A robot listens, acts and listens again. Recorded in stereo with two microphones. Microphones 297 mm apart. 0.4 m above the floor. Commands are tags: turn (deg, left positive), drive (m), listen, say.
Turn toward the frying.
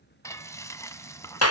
<turn deg="30"/>
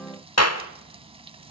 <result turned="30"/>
<turn deg="-20"/>
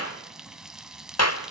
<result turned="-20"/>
<say>Found it: frying, straight ahead.</say>